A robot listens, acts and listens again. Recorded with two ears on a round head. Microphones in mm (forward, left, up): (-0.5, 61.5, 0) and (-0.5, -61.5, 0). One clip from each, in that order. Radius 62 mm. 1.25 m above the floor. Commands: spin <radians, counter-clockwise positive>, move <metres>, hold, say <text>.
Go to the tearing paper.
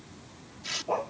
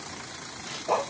spin 1.05
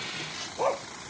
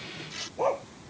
move 1.0
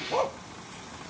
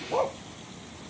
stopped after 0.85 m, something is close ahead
hold
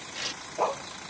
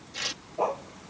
say Something is in my way. I am facing the tearing paper but have not reached it.